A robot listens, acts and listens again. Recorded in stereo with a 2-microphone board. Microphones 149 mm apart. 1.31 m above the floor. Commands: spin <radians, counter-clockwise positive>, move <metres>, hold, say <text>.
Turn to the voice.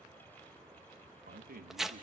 spin -1.57
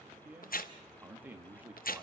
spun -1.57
spin -0.17
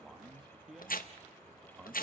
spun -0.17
say Facing the man speaking.